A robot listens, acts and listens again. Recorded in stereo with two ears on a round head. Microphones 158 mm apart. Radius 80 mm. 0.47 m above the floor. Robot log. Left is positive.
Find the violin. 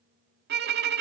note: The violin: about 70° right or 110° right.
cmd yaw -70
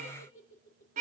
note: So it is at 45° right.
cmd yaw -45
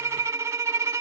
note: The violin is now 15° right.
cmd yaw -15
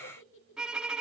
end: Facing the violin.